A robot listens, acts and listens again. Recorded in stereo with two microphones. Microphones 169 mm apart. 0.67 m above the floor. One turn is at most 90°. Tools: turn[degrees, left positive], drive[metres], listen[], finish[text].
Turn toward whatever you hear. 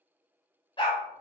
Thought: The dog barking: about 30° left or 150° left.
Action: turn[30]
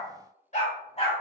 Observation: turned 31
Thought: The dog barking: about 40° left or 140° left.
Action: turn[40]
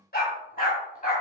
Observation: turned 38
Thought: So it is at 125° left.
Action: turn[90]
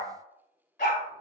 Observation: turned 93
Thought: The dog barking is now 55° left.
Action: turn[55]
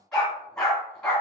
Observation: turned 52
Action: finish[Facing the dog barking, 2 to 4 m away.]